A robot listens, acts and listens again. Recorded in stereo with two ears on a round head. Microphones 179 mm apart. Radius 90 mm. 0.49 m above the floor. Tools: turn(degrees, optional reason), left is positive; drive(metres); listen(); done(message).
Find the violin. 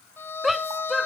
turn(degrees=30)
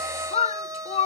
turn(degrees=-20, reason="So it is at 20° right.")
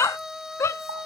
done("Found it: a violin, straight ahead.")